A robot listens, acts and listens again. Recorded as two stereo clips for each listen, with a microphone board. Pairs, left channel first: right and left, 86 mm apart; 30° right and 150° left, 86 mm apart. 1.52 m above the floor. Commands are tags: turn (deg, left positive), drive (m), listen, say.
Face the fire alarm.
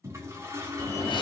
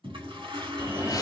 <turn deg="-145"/>
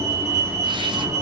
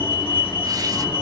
<turn deg="35"/>
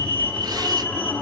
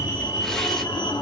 <turn deg="-15"/>
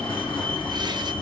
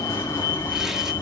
<turn deg="-10"/>
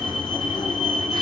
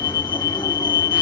<say>Facing the fire alarm, 1 to 2 m away.</say>